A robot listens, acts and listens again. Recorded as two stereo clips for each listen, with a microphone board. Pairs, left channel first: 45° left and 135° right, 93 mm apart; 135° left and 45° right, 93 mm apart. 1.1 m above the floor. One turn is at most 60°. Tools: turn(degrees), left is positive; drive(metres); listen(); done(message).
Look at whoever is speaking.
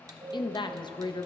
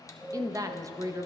turn(degrees=10)
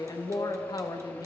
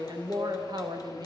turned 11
done("Facing the woman speaking, under 1 m away.")